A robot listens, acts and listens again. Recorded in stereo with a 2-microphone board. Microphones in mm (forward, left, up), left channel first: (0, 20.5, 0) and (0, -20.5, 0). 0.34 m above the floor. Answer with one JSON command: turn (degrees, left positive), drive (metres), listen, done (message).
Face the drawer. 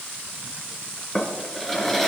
{"turn": 30}
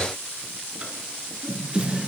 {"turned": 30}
{"turn": -25}
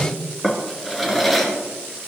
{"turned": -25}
{"done": "Found it: a drawer, straight ahead, 2 to 4 m away."}